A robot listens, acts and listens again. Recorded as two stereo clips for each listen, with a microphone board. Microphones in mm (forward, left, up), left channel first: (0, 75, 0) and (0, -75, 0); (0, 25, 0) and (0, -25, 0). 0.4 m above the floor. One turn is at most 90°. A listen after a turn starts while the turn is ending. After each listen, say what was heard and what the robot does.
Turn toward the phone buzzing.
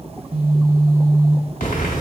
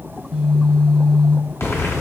Turn 30° right.
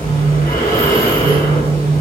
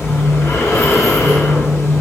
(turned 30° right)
So it is at 140° right. Turn 90° right.
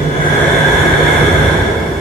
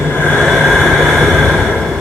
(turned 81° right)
Nothing new. It was at 60° right. Turn 60° right.
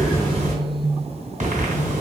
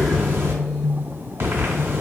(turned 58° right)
Facing the phone buzzing.